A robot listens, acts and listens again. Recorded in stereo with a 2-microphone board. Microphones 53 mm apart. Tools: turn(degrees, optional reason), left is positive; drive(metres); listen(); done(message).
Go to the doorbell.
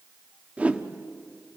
listen()
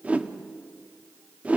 listen()
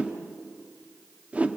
done("I can't make out a doorbell, only a whoosh.")